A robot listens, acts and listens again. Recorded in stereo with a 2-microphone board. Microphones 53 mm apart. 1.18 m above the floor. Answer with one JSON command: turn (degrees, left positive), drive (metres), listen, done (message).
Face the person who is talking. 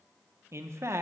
{"turn": -60}
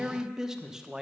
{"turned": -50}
{"turn": -10}
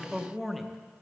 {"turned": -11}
{"done": "Found it: a man speaking, straight ahead, under 1 m away."}